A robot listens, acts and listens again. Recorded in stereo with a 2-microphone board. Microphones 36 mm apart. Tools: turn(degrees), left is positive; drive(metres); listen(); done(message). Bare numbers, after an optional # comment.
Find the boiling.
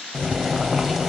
turn(-30)
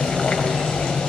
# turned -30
# So it is at 25° left.
turn(25)
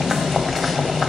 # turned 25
done("Facing the boiling.")